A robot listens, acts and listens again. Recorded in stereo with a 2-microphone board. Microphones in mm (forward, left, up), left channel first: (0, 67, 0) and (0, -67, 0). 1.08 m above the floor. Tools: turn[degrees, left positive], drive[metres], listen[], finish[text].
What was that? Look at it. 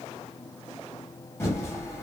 Thought: The typing on a keyboard: about 20° left or 160° left.
Action: turn[20]
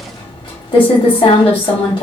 Thought: So it is at 140° left.
Action: turn[140]
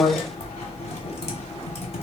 Thought: The typing on a keyboard is now 55° left.
Action: turn[55]
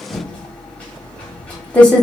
Thought: The typing on a keyboard is now 10° left.
Action: turn[10]
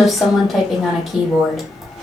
Action: finish[Found it: typing on a keyboard, straight ahead.]